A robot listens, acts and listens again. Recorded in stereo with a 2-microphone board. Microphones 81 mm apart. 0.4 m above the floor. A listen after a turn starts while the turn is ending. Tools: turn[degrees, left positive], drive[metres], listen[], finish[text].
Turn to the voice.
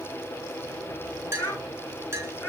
Thought: The child speaking: about 20° left or 160° left.
Action: turn[20]
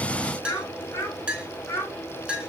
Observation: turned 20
Thought: The child speaking: about 30° left or 150° left.
Action: turn[30]
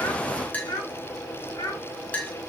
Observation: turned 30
Thought: So it is at 130° left.
Action: turn[130]
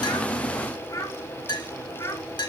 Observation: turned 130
Thought: The child speaking is now 40° left.
Action: turn[40]
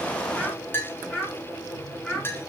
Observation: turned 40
Action: finish[Facing the child speaking, 2 to 4 m away.]